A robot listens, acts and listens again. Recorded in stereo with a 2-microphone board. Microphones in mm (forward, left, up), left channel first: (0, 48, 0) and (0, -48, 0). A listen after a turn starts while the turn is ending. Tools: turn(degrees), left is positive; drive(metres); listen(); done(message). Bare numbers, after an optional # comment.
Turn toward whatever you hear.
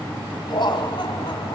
# The laughter: about 55° left or 125° left.
turn(55)
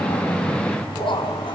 # So it is at 65° left.
turn(65)
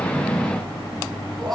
done("Found it: laughter, straight ahead.")